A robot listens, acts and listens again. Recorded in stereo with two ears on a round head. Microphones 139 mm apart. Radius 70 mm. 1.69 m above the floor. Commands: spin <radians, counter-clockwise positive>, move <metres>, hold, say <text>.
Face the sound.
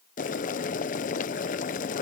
spin 0.96
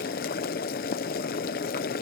spin 1.13
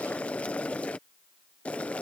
spin 0.17
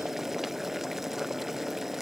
say Facing the boiling.